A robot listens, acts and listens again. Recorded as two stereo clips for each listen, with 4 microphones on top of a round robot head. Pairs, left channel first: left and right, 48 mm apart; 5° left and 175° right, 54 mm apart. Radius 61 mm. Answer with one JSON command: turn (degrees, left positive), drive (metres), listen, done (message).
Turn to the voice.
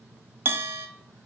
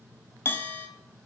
{"listen": true}
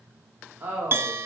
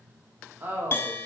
{"turn": -130}
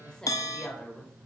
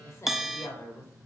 {"turn": 20}
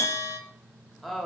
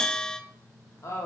{"done": "Found it: a woman speaking, straight ahead."}